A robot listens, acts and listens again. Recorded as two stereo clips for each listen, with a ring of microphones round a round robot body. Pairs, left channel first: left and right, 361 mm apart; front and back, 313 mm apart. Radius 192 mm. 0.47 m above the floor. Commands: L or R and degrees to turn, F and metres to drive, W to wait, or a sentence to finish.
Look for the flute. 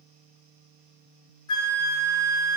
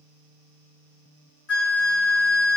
L50
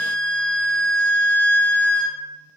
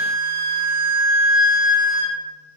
Found it: a flute, straight ahead.